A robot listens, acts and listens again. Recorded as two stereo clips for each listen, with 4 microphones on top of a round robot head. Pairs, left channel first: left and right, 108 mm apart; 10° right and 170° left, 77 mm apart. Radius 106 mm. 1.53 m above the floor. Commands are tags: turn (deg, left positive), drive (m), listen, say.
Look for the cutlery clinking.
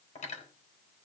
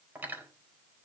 <turn deg="105"/>
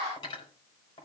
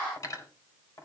<turn deg="35"/>
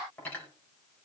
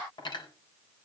<turn deg="10"/>
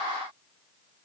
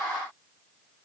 <listen/>
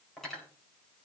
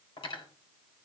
<say>Found it: cutlery clinking, straight ahead, over 4 m away.</say>